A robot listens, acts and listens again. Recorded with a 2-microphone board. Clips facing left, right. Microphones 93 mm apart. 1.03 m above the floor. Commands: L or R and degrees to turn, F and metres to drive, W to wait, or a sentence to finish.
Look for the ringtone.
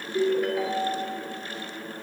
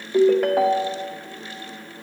R65
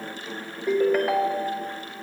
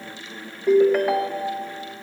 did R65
Facing the ringtone, under 1 m away.